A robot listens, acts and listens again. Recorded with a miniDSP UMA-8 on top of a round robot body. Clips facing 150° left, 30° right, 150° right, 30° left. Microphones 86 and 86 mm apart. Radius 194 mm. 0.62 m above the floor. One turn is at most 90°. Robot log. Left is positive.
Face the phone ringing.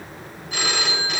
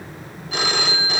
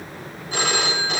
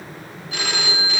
note: The phone ringing: 90° right.
cmd yaw -90
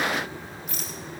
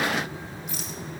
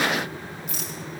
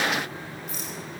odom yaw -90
cmd idle
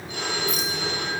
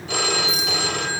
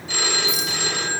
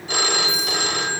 note: The phone ringing is now 15° right.
cmd yaw -15
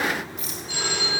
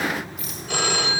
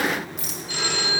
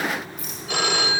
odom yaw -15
end: Found it: a phone ringing, straight ahead, 1 to 2 m away.